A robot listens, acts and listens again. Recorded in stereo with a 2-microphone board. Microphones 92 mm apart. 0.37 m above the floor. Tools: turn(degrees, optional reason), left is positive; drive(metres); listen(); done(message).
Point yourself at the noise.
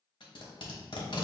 turn(degrees=65, reason="The tape being pulled: about 65° left or 115° left.")
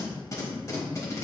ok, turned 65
turn(degrees=40, reason="So it is at 40° left.")
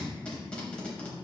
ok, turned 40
turn(degrees=15, reason="The tape being pulled is now 15° left.")
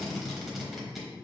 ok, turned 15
done("Facing the tape being pulled.")